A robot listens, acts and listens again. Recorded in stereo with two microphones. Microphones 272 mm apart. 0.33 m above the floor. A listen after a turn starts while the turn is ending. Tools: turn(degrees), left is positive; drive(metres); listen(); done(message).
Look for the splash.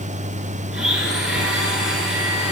listen()
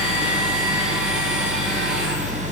listen()
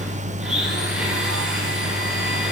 done("I can't make out a splash, only a blender.")